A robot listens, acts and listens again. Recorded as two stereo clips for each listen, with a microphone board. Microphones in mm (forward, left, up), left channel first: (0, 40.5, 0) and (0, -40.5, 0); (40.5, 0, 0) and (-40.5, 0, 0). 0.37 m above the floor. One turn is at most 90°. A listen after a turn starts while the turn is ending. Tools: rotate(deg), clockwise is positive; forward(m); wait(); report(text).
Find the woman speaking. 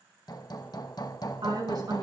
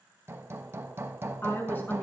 rotate(65)
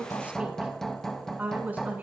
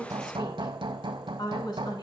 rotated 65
rotate(25)
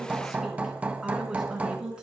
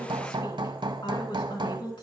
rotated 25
rotate(10)
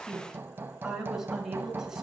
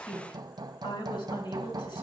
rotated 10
rotate(10)
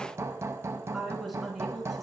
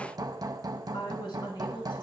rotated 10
report("Facing the woman speaking, over 4 m away.")